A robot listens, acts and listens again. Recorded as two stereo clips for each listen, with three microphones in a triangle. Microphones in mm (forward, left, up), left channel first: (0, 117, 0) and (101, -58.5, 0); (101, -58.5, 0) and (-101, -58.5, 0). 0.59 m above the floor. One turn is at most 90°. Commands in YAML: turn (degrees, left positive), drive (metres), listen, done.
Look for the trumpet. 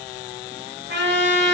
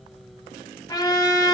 turn: -70
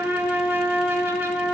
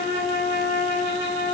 turn: 20
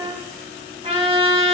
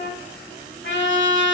done: "Found it: a trumpet, straight ahead."